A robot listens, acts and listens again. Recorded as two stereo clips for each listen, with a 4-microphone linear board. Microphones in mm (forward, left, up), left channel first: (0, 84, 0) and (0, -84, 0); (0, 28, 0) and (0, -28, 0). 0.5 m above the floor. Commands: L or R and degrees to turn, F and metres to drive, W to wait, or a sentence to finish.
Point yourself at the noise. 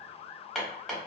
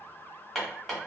L30
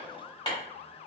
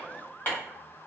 L150
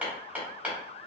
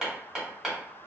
R10
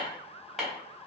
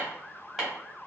Facing the hammering.